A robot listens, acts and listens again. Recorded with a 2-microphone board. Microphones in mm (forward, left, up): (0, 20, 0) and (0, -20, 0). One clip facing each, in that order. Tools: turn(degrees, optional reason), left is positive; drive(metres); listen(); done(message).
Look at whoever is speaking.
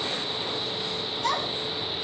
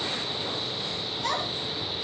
turn(degrees=-30)
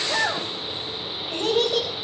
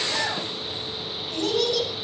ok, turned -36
turn(degrees=30, reason="So it is at 30° left.")
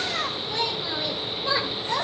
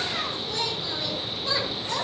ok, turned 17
turn(degrees=15, reason="The child speaking is now 15° left.")
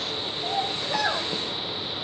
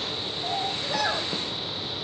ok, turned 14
done("Found it: a child speaking, straight ahead, over 4 m away.")